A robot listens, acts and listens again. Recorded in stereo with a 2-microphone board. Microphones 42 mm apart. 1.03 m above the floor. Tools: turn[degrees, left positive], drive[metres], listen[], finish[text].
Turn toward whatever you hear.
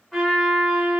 Action: turn[30]
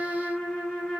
Thought: So it is at 145° left.
Action: turn[145]
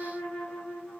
Thought: The trumpet is now 30° left.
Action: turn[30]
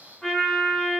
Action: finish[Facing the trumpet.]